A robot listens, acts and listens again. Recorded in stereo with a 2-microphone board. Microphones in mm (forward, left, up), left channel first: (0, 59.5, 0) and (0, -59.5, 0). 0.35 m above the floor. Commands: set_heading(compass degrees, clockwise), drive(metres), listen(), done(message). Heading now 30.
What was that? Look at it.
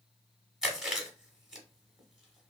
set_heading(60)
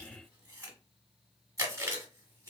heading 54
set_heading(204)
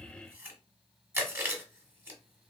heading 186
set_heading(206)
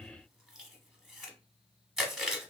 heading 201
done("Found it: chewing, straight ahead, 1 to 2 m away.")